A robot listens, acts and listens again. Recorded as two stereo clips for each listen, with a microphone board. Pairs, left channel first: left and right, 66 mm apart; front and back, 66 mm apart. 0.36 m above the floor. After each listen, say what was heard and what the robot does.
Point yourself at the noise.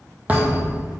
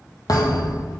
The thud: 25° right. Turn 25° right.
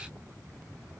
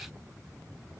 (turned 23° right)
I heard a thud from this way, but can't make it out now.